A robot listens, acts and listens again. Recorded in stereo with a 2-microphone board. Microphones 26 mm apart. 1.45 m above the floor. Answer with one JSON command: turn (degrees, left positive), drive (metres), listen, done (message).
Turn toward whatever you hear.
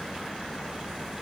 {"listen": true}
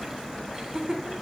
{"turn": -25}
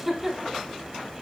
{"done": "Found it: laughter, straight ahead, over 4 m away."}